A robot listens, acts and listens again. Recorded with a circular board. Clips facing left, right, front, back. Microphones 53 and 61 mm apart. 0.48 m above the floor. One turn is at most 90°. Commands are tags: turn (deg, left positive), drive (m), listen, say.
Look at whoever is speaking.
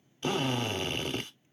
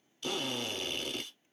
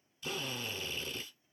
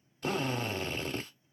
<listen/>
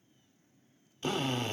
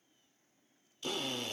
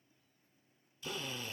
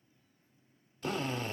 <listen/>
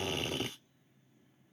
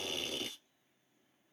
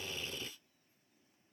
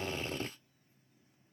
<say>I can't make out anyone speaking to turn to.</say>